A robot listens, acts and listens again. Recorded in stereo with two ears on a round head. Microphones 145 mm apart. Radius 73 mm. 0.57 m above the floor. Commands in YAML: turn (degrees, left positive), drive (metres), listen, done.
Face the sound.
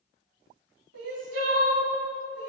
turn: -90
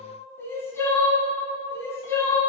turn: 15
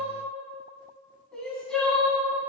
done: "Facing the crying, 1 to 2 m away."